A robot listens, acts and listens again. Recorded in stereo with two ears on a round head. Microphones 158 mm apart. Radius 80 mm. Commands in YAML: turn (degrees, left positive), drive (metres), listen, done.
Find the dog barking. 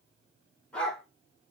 turn: 30
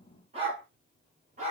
turn: -40
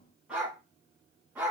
turn: -10
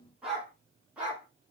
turn: -10
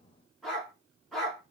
done: "Facing the dog barking."